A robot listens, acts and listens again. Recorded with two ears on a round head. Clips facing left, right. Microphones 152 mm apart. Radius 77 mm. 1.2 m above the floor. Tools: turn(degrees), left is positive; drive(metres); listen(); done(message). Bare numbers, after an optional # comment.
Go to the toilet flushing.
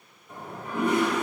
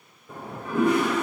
# The toilet flushing: about 65° right or 115° right.
turn(-65)
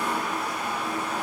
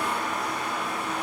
drive(1.0)
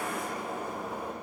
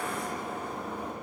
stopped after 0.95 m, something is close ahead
# The toilet flushing is now 10° left.
turn(10)
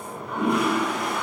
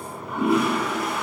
done("Arrived at the toilet flushing, straight ahead.")